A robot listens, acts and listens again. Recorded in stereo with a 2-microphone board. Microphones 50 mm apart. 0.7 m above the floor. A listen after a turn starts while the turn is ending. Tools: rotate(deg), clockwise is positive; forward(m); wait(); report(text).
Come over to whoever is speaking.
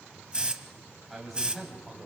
rotate(30)
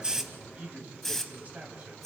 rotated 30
rotate(145)
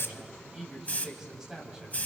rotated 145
rotate(15)
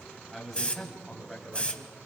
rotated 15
forward(1.0)
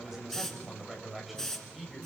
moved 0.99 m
forward(1.0)
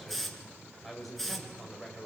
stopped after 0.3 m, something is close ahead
report("Something is in my way. I am facing the man speaking but have not reached it.")